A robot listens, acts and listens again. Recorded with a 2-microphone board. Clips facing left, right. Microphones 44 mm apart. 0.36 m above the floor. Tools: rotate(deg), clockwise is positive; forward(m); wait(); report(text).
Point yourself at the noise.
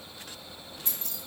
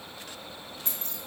rotate(35)
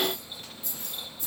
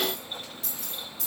rotate(100)
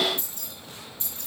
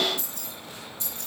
rotate(-25)
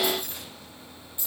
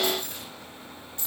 rotate(-20)
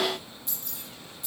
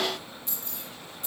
report("Facing the keys jangling, over 4 m away.")